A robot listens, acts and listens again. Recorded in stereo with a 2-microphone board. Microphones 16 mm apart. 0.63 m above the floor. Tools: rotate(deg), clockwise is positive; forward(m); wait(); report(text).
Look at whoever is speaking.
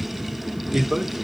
rotate(60)
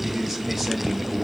rotate(10)
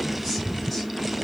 wait()
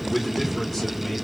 rotate(-15)
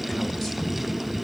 wait()
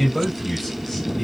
rotate(-10)
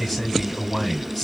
report("Found it: a man speaking, straight ahead.")